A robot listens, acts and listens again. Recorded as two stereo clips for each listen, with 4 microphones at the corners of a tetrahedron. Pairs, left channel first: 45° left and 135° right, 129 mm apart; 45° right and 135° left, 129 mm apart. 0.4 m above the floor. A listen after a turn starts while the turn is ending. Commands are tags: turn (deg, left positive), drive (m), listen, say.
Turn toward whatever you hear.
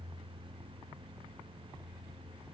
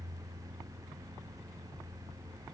<listen/>
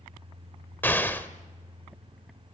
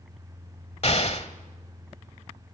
<turn deg="-30"/>
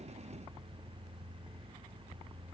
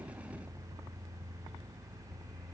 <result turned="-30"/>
<say>I heard an explosion from this way, but can't make it out now.</say>